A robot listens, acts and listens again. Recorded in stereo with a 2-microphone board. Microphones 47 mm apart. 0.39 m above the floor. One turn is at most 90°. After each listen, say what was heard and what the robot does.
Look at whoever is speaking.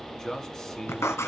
Turn 30° left.
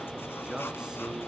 So it is at 15° right. Turn 15° right.
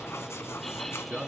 Facing the man speaking.